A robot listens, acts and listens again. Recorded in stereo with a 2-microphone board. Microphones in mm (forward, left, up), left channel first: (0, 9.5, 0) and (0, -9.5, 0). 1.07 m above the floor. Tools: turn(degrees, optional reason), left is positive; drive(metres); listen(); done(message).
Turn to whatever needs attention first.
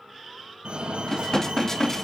turn(degrees=-60, reason="The fire alarm: about 60° right or 120° right.")
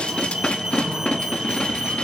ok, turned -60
turn(degrees=-35, reason="So it is at 35° right.")
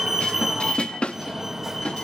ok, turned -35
turn(degrees=-15, reason="The fire alarm is now 15° right.")
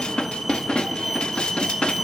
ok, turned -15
done("Found it: a fire alarm, straight ahead, 2 to 4 m away.")